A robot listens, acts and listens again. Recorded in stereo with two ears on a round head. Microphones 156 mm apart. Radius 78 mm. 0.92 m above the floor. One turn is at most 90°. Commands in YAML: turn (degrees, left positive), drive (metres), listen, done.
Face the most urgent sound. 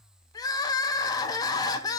turn: 20
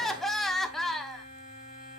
done: "Facing the crying."